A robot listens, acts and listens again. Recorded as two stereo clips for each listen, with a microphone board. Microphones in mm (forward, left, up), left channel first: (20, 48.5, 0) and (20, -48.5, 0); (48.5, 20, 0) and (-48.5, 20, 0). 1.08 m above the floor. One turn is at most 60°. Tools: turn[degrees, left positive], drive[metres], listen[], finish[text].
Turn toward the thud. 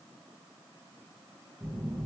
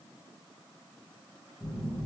Action: listen[]
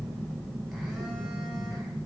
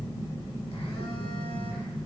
Action: listen[]
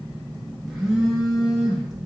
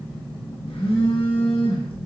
Action: finish[I can't make out a thud to turn to.]